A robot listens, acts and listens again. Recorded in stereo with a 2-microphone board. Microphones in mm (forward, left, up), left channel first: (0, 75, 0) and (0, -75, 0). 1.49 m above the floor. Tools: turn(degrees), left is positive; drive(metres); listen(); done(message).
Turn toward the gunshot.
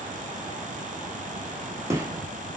turn(degrees=-20)
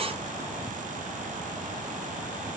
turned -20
listen()
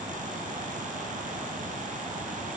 done("I heard a gunshot, but can't make it out now. It was about straight ahead or 140° right.")